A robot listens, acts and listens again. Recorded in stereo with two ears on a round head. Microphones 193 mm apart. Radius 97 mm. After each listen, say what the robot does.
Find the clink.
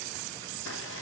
Keep listening.
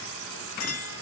Turn 90° left.
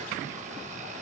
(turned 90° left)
Keep listening.
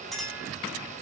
Facing the clink.